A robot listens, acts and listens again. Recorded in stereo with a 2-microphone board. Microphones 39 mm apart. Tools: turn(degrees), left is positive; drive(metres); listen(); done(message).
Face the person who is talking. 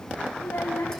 turn(degrees=90)
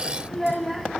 done("Found it: a child speaking, straight ahead.")